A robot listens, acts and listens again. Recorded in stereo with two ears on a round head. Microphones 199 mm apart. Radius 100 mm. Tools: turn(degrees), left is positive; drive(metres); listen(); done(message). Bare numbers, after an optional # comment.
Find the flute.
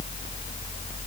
listen()
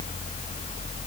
listen()
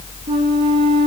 # The flute: about 25° right or 155° right.
turn(-25)
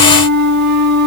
# So it is at 130° right.
turn(-130)
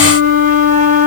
# The flute is now 40° right.
turn(-40)
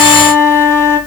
# The flute is now 10° left.
turn(10)
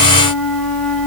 listen()
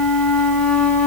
listen()
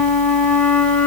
done("Found it: a flute, straight ahead.")